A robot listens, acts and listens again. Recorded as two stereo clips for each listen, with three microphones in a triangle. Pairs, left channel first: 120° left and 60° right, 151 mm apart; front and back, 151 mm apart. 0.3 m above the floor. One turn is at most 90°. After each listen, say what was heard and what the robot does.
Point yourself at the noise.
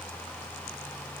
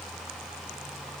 Keep listening.
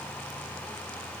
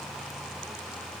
Keep listening.
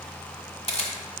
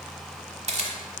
The camera shutter: 155° left. Turn 90° left.
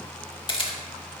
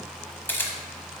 The camera shutter is now 75° left. Turn 75° left.
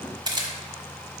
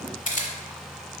Facing the camera shutter.